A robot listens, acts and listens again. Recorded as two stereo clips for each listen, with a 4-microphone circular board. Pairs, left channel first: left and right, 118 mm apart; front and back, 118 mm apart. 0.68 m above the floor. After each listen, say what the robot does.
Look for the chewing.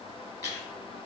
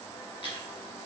Turn 35° left.
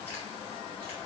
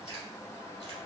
Turn 20° left.
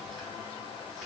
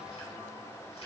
Keep listening.
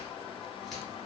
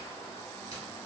Keep listening.
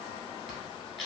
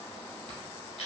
Found it: chewing, straight ahead.